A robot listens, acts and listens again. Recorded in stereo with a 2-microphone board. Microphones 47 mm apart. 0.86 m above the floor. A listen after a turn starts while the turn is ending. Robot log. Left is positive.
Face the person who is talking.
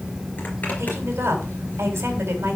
note: The woman speaking: about 65° right or 115° right.
cmd yaw -65
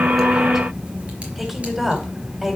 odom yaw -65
end: Facing the woman speaking, 2 to 4 m away.